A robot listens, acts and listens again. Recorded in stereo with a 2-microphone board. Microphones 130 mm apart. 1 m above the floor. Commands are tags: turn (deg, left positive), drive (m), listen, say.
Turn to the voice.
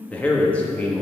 <turn deg="30"/>
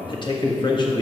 <turn deg="140"/>
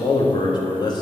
<turn deg="35"/>
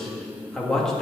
<say>Facing the man speaking.</say>